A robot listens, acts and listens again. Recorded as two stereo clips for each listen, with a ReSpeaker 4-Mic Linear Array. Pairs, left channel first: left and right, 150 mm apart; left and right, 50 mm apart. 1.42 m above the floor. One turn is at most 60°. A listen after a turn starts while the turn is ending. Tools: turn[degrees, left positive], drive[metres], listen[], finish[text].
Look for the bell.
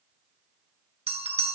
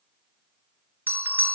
Thought: The bell: about 45° right or 135° right.
Action: turn[-45]
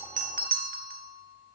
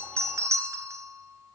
Thought: So it is at 95° right.
Action: turn[-60]
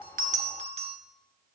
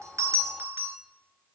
Thought: The bell is now 45° right.
Action: turn[-45]
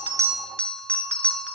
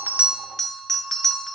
Thought: The bell is now 10° left.
Action: turn[10]
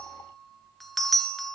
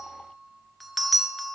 Action: finish[Facing the bell.]